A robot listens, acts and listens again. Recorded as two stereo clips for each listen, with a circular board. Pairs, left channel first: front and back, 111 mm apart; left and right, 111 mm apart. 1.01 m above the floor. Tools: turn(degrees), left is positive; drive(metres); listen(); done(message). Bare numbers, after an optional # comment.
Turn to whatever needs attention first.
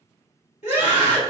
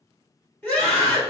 # The scream: 15° left.
turn(15)
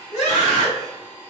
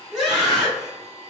done("Facing the scream.")